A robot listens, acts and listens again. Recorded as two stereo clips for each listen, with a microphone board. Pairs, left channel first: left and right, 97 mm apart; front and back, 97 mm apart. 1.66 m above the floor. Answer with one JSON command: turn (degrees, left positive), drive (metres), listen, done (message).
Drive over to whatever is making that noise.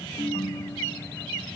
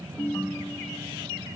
{"turn": 65}
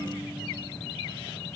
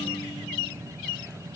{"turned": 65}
{"listen": true}
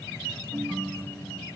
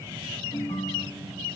{"drive": 1.0}
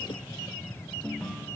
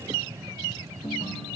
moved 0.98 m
{"drive": 1.0}
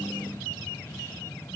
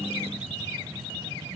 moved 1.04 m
{"listen": true}
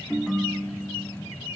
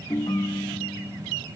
{"drive": 1.0}
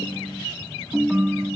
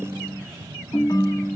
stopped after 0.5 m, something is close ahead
{"turn": -10}
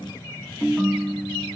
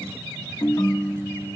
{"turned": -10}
{"done": "I am next to the ringtone."}